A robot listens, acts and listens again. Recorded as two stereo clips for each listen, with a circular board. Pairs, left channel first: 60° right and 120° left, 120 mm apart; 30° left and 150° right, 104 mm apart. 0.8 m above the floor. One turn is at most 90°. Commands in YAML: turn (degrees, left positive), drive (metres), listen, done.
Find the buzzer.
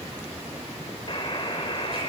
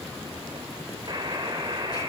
turn: -90
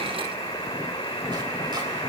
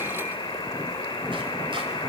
turn: -10
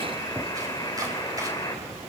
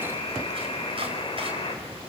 done: "Facing the buzzer."